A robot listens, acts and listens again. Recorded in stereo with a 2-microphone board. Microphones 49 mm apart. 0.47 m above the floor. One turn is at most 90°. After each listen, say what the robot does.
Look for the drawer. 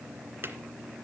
Turn 50° right.
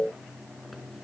Keep listening.
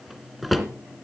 Facing the drawer, 2 to 4 m away.